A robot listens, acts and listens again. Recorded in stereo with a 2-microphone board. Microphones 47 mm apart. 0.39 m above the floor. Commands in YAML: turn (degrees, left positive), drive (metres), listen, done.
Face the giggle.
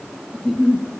turn: 30
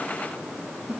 turn: -25
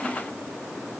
listen: true
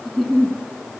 done: "Facing the giggle, over 4 m away."